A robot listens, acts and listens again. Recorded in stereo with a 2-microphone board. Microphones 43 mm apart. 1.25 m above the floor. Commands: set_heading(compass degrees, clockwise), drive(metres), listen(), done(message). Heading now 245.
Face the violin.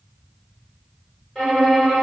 set_heading(215)
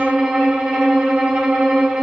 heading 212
set_heading(237)
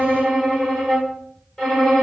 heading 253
set_heading(238)
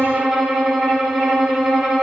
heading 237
done("Facing the violin, 1 to 2 m away.")